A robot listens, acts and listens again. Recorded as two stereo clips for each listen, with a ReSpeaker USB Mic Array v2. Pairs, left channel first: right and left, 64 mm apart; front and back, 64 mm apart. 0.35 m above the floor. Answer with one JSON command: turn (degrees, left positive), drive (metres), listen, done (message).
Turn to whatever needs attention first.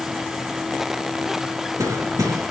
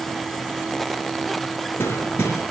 {"listen": true}
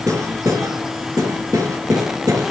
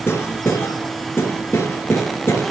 {"listen": true}
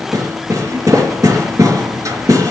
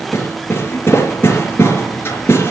{"done": "I can't make out anything urgent, only hammering."}